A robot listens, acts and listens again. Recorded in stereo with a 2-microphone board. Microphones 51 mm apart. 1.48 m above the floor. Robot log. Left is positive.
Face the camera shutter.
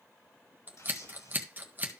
note: The camera shutter: about 70° left or 110° left.
cmd yaw +70
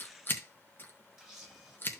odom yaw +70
end: Facing the camera shutter.